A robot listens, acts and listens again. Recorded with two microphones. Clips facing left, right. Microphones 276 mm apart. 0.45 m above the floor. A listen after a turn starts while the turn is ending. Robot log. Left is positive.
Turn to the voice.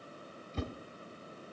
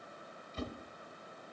cmd idle
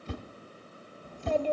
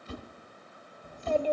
cmd yaw -30
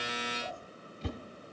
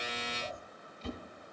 note: So it is at 135° right.
cmd yaw -135
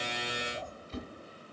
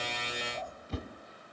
note: The child speaking is now 40° left.
cmd yaw +40
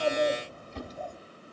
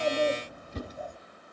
note: The child speaking is now 15° right.
cmd yaw -15
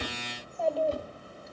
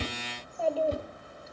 end: Facing the child speaking.